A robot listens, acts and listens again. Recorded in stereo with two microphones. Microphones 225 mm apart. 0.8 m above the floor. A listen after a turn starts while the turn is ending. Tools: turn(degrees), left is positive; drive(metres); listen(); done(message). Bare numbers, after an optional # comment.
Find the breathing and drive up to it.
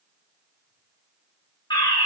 listen()
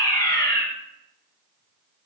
listen()
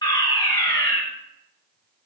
done("I can't make out breathing to turn to.")